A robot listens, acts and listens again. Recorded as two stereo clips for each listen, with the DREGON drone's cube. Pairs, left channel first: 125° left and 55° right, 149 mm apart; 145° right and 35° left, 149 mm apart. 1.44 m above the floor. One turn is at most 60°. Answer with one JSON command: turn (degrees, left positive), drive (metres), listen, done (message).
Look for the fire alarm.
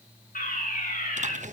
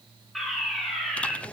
{"turn": 60}
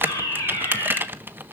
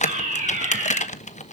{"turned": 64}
{"turn": 60}
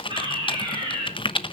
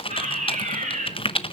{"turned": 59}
{"done": "Facing the fire alarm."}